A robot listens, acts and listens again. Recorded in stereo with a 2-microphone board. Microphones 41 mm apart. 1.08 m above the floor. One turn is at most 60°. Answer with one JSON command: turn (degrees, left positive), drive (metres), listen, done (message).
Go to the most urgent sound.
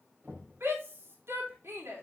{"turn": -60}
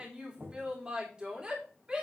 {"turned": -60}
{"turn": -25}
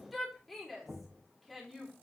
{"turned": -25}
{"drive": 1.0}
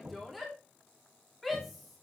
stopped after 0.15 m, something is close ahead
{"done": "Blocked. The shout is further on, straight ahead."}